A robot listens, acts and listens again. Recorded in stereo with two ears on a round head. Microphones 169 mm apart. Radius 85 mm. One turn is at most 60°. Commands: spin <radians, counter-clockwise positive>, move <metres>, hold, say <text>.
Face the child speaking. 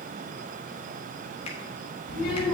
spin 1.05
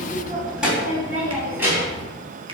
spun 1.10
spin -0.26
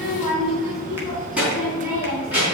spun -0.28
spin -0.17
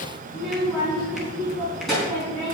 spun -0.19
say Found it: a child speaking, straight ahead, over 4 m away.